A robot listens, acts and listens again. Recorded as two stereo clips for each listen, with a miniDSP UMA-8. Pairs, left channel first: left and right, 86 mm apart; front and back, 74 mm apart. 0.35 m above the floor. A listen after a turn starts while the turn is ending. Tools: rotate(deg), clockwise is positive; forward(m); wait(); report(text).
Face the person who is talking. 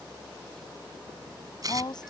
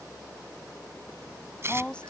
rotate(-75)
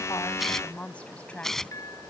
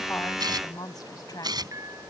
rotate(-20)
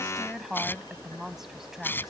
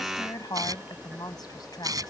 report("Found it: a woman speaking, straight ahead.")